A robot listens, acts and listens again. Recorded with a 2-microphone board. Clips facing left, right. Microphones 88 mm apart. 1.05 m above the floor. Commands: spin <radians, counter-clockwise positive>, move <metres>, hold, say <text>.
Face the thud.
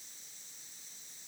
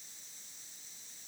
hold
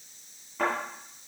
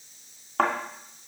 spin -1.57
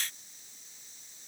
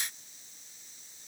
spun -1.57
say Facing where the thud came from. I can't hear it now.